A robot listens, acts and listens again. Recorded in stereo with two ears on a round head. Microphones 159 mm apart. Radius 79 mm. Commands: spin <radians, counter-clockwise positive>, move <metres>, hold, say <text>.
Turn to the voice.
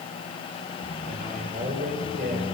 spin -0.87
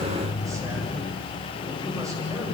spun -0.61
hold
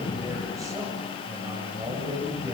spin -0.35
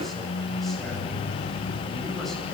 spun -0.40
say Facing the man speaking.